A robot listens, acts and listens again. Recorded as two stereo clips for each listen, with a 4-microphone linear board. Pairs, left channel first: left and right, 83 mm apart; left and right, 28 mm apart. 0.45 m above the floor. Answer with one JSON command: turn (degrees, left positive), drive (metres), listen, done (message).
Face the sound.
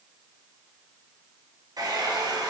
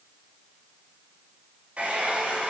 {"turn": -55}
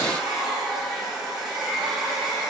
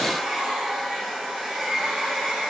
{"done": "Found it: a hair dryer, straight ahead."}